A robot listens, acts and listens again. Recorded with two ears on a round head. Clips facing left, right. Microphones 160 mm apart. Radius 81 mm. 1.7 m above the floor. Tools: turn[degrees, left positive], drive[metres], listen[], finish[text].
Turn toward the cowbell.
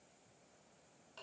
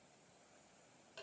Action: listen[]
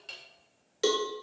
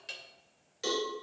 Thought: The cowbell: about 60° left or 120° left.
Action: turn[60]
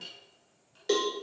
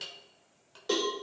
Thought: So it is at 15° left.
Action: turn[15]
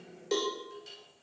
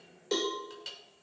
Action: finish[Found it: a cowbell, straight ahead.]